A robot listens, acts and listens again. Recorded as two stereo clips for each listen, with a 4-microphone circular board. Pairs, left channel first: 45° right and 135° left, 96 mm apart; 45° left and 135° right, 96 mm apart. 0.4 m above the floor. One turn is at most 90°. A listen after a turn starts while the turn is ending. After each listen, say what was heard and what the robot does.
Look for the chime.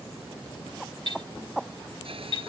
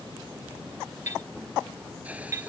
The chime: 75° right. Turn 75° right.
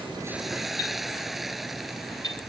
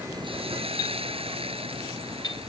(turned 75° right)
Facing the chime.